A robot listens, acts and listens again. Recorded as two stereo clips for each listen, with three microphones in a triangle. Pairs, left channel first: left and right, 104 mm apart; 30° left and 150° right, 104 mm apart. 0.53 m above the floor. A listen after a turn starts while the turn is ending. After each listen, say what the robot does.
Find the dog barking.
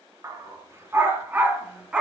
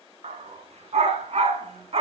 Turn 175° right.
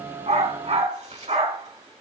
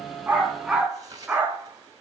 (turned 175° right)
Turn 75° right.
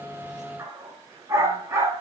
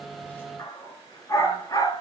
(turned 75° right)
Turn 30° right.
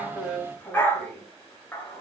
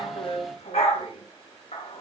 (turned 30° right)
Turn 20° left.
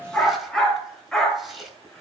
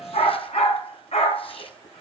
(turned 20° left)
Found it: a dog barking, straight ahead.